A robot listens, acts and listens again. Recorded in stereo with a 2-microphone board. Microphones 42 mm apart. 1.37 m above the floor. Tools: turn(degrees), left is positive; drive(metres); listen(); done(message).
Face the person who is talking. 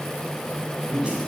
turn(degrees=-30)
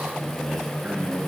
turn(degrees=-140)
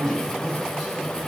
turn(degrees=10)
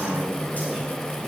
listen()
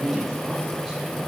done("Found it: a man speaking, straight ahead, over 4 m away.")